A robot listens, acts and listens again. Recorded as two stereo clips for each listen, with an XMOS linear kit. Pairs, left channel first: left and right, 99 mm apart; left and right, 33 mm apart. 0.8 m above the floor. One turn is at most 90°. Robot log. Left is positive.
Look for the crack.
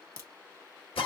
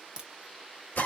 note: The crack: about 30° right or 150° right.
cmd yaw -30
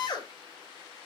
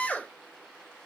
cmd idle
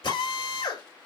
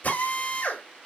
end: I heard a crack, but can't make it out now. It was about straight ahead or 120° right.